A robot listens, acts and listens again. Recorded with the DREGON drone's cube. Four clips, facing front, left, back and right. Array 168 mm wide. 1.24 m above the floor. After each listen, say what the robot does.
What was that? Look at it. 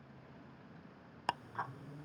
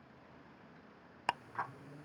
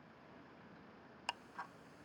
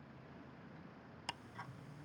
Turn 55° left.
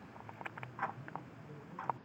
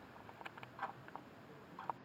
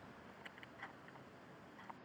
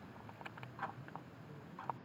Found it: ticking, straight ahead.